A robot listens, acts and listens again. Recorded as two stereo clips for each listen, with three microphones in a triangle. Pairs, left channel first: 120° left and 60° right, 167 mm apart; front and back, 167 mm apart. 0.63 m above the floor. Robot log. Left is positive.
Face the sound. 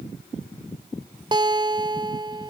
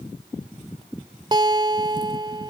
note: The guitar: 120° right.
cmd yaw -120
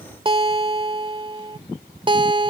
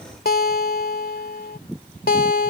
end: Facing the guitar.